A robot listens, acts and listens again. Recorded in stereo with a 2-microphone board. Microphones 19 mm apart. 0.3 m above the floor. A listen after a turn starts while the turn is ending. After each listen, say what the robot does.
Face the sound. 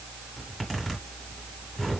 Turn 30° left.
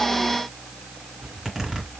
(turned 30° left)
Turn 25° right.
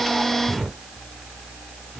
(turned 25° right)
Found it: a zipper, straight ahead, 2 to 4 m away.